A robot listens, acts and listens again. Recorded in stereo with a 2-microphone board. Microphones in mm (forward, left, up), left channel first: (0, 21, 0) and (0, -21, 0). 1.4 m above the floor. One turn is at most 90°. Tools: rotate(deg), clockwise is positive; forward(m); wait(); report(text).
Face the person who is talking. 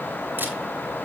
wait()
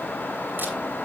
wait()
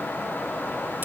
report("I can't make out anyone speaking.")